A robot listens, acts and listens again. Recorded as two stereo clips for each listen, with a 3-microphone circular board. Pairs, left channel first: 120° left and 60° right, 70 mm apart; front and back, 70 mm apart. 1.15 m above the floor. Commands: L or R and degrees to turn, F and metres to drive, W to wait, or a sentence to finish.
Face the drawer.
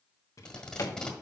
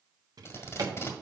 L160
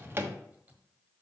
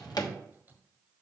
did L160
Facing the drawer, 1 to 2 m away.